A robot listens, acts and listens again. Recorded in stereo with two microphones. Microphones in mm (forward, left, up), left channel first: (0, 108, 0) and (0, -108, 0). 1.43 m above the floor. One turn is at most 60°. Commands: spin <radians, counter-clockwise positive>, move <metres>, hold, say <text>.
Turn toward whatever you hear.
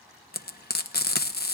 spin 0.79
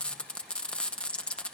say Found it: frying, straight ahead.